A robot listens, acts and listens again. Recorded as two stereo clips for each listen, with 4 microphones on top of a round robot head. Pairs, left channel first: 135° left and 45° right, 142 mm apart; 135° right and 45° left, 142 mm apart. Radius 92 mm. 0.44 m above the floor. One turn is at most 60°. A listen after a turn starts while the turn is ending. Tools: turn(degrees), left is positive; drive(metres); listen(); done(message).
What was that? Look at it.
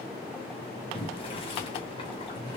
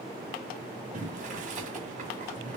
turn(degrees=60)
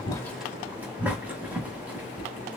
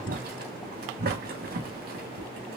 turn(degrees=35)
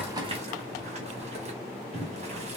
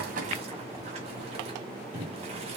done("Found it: boiling, straight ahead.")